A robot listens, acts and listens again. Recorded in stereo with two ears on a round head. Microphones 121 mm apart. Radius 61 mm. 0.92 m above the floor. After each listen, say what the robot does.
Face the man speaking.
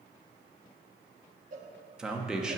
Turn 30° right.
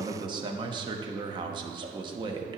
Turn 145° right.
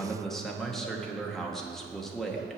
Found it: a man speaking, straight ahead.